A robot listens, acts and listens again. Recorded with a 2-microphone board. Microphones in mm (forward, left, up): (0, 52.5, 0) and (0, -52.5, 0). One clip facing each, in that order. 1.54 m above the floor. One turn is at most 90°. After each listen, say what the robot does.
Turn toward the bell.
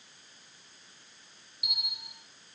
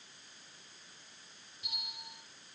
Turn 30° left.
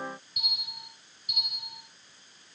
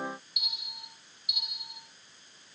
Turn 90° left.
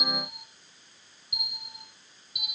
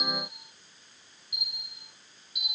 Turn 55° left.
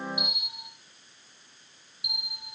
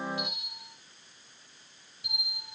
Turn 15° left.
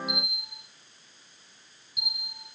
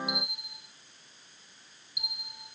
Facing the bell, 2 to 4 m away.